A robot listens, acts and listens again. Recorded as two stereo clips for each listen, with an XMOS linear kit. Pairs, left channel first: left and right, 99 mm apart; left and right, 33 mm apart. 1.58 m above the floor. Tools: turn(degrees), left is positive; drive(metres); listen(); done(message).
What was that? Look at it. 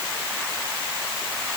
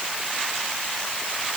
listen()
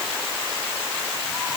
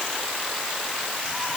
listen()
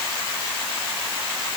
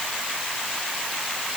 done("I can't make out anything.")